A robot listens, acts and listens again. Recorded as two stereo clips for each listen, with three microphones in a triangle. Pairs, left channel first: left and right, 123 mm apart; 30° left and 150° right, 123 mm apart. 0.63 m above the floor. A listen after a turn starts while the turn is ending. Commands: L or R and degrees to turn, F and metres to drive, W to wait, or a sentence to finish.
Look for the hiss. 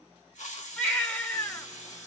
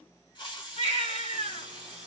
L80
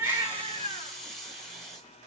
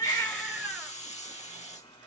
Found it: a hiss, straight ahead.